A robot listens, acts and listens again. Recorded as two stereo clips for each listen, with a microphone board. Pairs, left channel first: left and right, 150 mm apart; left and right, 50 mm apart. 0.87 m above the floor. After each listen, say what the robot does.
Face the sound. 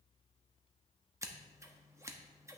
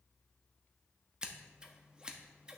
Turn 20° right.
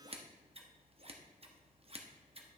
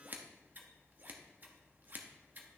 Turn 140° right.
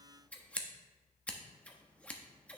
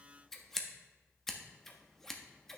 Turn 10° left.
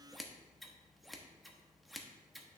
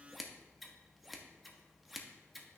Found it: scissors, straight ahead.